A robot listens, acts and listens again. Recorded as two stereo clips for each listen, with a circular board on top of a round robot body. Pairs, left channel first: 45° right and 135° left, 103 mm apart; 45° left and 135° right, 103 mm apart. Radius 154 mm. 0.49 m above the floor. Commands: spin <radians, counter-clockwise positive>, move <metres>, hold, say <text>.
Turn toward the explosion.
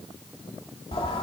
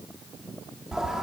hold
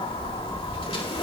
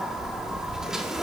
hold
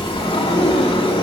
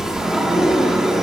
say I can't make out an explosion, only a sliding door.